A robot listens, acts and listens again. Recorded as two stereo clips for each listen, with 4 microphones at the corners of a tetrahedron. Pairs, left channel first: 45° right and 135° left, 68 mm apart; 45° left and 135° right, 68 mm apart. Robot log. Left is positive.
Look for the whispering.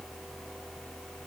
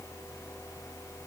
cmd idle
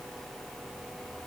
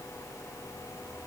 cmd idle
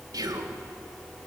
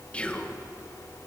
note: The whispering: 115° left.
cmd yaw +115
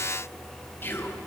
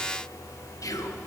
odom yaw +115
note: The whispering is now 10° left.
cmd yaw +10
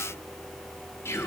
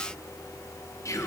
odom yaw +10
end: Found it: whispering, straight ahead.